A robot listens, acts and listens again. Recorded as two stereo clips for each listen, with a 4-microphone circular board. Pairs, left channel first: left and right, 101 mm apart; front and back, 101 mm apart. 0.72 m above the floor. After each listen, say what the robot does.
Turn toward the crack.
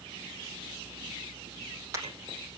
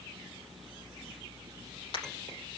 Keep listening.
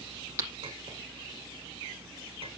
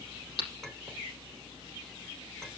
Turn 30° right.
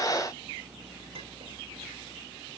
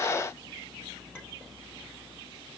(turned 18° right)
Turn 10° right.
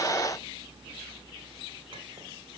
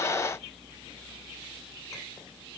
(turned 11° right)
I heard a crack from this way, but can't make it out now.